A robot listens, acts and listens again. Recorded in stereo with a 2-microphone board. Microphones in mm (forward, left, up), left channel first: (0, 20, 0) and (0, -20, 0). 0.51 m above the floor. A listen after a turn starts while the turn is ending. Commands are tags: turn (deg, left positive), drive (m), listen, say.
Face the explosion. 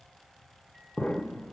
<turn deg="40"/>
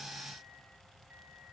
<listen/>
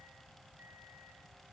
<say>I heard an explosion, but can't make it out now. It was about straight ahead or 100° left.</say>